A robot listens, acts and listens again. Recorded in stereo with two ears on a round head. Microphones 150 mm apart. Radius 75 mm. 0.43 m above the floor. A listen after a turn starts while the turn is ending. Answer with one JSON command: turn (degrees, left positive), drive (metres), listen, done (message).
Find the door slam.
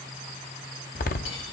{"turn": 55}
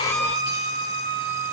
{"listen": true}
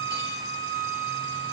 {"done": "I heard a door slam, but can't make it out now. It was about straight ahead or 70° left."}